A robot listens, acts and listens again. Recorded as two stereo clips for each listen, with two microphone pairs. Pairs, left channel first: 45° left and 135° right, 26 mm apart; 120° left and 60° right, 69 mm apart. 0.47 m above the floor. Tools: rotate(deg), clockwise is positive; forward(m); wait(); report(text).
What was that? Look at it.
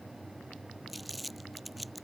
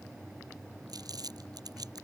rotate(45)
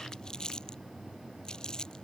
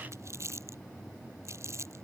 rotate(15)
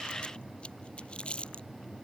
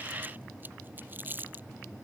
report("Found it: crumpling, straight ahead.")